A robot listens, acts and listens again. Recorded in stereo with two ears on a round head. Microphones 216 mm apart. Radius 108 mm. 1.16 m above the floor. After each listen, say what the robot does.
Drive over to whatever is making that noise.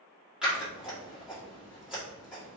Turn 30° right.
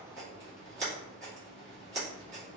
Turn 150° right.
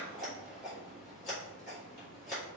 Turn 35° left.
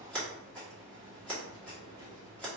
Drive 1.0 m forward.
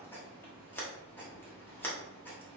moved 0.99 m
Turn 10° left.
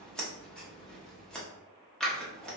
Drive 1.0 m forward.
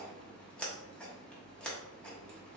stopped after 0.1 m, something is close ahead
I am next to the scissors.